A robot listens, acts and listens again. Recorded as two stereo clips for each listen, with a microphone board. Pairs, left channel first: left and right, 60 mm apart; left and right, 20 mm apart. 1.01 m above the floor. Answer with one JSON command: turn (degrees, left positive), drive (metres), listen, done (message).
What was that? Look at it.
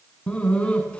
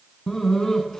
{"turn": 15}
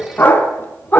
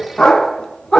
{"turn": 150}
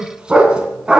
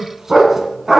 {"turn": -15}
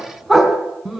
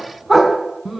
{"done": "Found it: a dog barking, straight ahead, 2 to 4 m away."}